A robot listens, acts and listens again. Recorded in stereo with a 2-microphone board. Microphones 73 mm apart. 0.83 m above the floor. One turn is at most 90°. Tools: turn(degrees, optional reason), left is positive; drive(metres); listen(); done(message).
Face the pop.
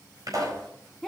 turn(degrees=-55, reason="The pop: about 55° right or 125° right.")
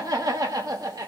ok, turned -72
listen()
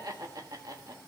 done("I heard a pop, but can't make it out now. It was about 20° left or 55° right.")